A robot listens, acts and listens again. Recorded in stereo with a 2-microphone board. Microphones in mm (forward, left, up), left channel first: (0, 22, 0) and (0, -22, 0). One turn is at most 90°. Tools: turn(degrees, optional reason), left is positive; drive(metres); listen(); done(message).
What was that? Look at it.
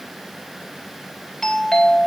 turn(degrees=30)
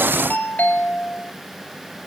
turn(degrees=90, reason="So it is at 135° left.")
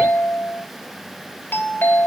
turn(degrees=60, reason="The doorbell is now 60° left.")
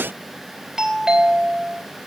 turn(degrees=-15, reason="The doorbell is now 15° right.")
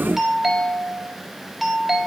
done("Found it: a doorbell, straight ahead.")